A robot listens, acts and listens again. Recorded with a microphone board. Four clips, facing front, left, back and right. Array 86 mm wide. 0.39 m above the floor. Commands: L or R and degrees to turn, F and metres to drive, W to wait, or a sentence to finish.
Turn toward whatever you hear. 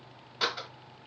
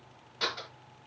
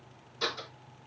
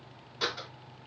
L10
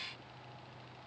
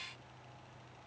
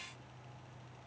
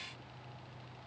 Facing where the door slam came from. I can't hear it now.